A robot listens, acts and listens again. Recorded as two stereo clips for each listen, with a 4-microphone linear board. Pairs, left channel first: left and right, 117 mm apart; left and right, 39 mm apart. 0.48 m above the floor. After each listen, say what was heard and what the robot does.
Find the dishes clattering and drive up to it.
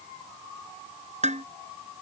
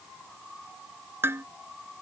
Turn 90° right.
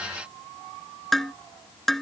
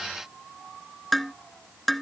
Drive 1.0 m forward.
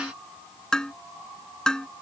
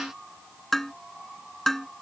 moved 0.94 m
Drive 1.0 m forward.
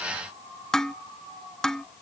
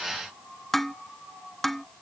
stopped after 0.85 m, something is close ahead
Something is in my way. I am facing the dishes clattering but have not reached it.